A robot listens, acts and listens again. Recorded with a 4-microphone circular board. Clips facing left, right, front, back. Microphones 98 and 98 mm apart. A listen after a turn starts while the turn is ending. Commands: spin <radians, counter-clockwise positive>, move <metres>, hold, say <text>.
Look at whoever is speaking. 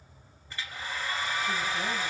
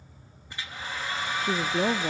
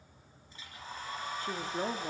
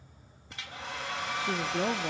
spin -1.83
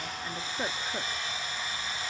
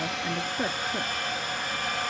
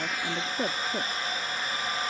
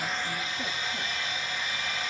hold
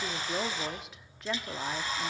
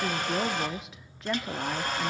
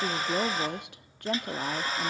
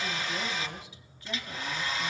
say Found it: a woman speaking, straight ahead, 1 to 2 m away.